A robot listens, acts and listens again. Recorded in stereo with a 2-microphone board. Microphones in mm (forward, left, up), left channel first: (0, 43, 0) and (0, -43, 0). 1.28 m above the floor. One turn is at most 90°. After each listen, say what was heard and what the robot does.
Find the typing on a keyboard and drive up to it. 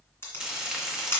The typing on a keyboard: about 25° left or 155° left. Turn 25° left.
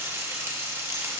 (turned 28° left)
Keep listening.
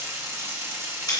Keep listening.
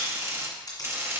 I heard typing on a keyboard, but can't make it out now. It was about straight ahead or 125° left. I did not reach it.